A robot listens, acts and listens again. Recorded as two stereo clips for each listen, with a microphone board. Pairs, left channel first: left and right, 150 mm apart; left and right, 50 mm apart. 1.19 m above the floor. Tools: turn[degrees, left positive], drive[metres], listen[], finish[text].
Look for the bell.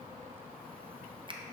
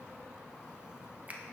Action: listen[]
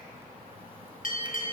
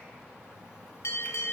Thought: The bell: about 60° left or 120° left.
Action: turn[60]
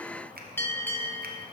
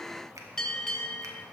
Thought: So it is at 15° left.
Action: turn[15]
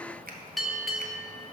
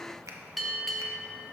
Action: finish[Facing the bell, under 1 m away.]